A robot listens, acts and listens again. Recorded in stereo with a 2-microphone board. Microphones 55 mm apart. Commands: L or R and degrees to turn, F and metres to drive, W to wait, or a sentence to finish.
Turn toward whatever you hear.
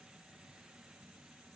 W
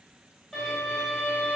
L30
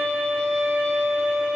R20
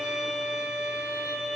R10
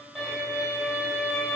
Facing the violin, 1 to 2 m away.